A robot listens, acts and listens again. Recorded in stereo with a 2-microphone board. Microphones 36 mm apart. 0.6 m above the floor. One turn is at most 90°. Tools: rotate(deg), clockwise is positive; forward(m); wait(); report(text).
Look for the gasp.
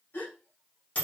rotate(-70)
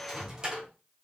wait()
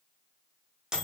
report("I heard a gasp, but can't make it out now. It was about straight ahead or 40° left.")